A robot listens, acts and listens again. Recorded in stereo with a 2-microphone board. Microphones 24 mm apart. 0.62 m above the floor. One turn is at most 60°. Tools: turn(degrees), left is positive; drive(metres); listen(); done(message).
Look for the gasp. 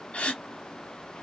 turn(degrees=60)
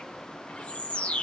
listen()
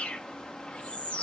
done("I heard a gasp, but can't make it out now. It was about straight ahead or 60° left.")